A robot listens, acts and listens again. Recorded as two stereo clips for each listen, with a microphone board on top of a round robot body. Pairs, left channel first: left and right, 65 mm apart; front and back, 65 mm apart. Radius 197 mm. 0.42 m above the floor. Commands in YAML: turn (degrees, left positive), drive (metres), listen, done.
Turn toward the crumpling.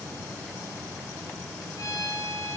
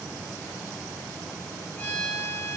listen: true
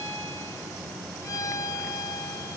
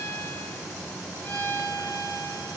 listen: true
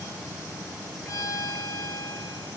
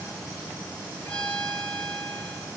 done: "I can't make out crumpling, only a violin."